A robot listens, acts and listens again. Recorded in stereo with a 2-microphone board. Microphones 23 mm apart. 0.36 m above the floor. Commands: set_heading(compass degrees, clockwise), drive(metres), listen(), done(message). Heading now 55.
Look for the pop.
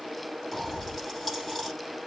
set_heading(25)
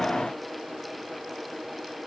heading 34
listen()
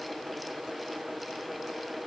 done("I heard a pop, but can't make it out now. It was about 20° right or 155° left.")